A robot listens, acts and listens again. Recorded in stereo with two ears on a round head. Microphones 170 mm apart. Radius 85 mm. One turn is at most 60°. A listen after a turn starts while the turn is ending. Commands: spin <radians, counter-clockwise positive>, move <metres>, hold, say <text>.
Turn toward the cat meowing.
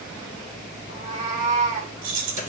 spin -0.70
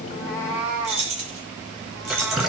spin -0.17
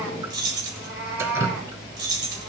say Found it: a cat meowing, straight ahead, over 4 m away.